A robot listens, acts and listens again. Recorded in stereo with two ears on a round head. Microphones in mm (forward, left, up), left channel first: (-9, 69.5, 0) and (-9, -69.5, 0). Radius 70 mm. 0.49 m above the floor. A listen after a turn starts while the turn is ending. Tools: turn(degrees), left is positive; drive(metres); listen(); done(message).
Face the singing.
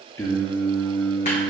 turn(degrees=35)
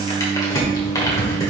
turn(degrees=15)
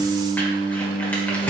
turn(degrees=25)
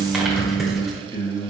turn(degrees=20)
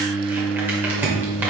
turn(degrees=15)
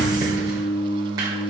done("Facing the singing.")